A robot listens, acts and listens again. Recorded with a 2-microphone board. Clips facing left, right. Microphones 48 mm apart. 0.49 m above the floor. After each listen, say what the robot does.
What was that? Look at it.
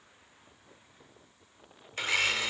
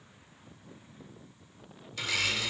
Turn 35° left.
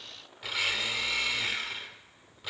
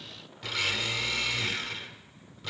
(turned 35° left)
Turn 10° left.
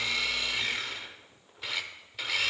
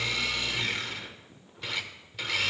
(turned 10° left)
Found it: a blender, straight ahead.